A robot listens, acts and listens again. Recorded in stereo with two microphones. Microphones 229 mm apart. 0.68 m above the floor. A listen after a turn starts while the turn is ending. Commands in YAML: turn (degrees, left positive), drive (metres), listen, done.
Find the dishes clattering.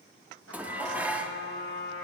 turn: -30
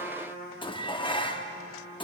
turn: 25
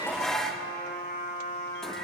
done: "Found it: dishes clattering, straight ahead, under 1 m away."